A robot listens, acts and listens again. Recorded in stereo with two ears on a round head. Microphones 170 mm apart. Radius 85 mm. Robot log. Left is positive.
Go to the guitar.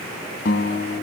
note: The guitar: about 50° left or 130° left.
cmd yaw +50
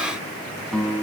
cmd fwd 1.0
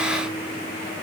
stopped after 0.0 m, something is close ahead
cmd idle
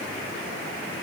cmd idle
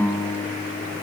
note: The guitar is now 10° left.
cmd yaw +10
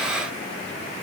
cmd idle
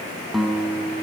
end: Blocked. The guitar is further on, straight ahead.